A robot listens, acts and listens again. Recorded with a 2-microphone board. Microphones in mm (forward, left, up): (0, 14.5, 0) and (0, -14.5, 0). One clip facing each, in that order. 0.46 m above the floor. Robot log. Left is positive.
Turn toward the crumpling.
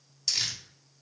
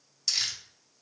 cmd yaw +30
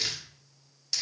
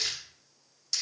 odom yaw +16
note: So it is at 160° left.
cmd yaw +160
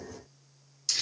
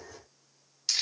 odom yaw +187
note: The crumpling is now 30° right.
cmd yaw -30
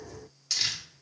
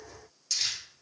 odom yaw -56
note: The crumpling is now 25° left.
cmd yaw +25
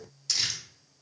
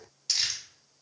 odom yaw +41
note: The crumpling is now 15° right.
cmd yaw -15
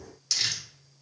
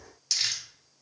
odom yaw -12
end: Found it: crumpling, straight ahead.